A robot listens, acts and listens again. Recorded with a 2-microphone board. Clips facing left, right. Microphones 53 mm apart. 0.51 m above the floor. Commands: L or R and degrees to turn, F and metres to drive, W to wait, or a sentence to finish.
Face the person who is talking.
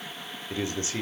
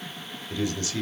L25
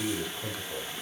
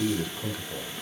Found it: a man speaking, straight ahead.